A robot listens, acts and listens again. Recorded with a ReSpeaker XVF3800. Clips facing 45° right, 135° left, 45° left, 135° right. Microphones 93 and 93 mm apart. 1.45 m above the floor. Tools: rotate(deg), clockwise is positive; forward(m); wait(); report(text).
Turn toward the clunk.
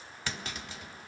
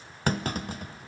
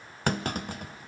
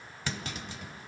rotate(-85)
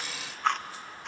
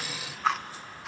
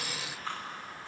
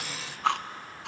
report("I heard a clunk from this way, but can't make it out now.")